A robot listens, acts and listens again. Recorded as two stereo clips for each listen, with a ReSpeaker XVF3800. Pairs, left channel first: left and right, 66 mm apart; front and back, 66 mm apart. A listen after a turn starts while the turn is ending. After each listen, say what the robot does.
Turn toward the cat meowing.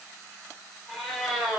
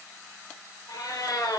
Turn 10° right.
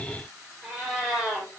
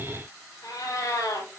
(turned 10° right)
Turn 10° right.
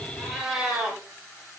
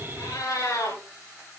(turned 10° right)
Turn 10° right.
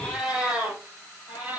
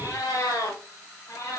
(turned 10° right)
Turn 20° right.
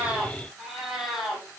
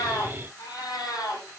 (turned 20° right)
Found it: a cat meowing, straight ahead.